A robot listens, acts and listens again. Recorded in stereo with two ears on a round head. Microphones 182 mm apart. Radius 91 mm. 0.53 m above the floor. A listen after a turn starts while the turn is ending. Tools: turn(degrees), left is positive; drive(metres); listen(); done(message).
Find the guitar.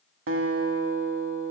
turn(degrees=-70)
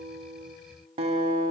turn(degrees=-30)
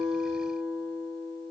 done("Found it: a guitar, straight ahead, under 1 m away.")